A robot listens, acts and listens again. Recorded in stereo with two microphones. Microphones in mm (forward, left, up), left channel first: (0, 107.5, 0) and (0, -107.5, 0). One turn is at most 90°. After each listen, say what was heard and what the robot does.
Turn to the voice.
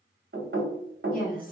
The woman speaking: about 45° left or 135° left. Turn 45° left.
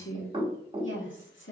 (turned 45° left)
So it is at 85° left. Turn 85° left.
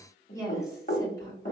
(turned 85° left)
The woman speaking is now 15° left. Turn 15° left.
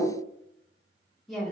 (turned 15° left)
Facing the woman speaking.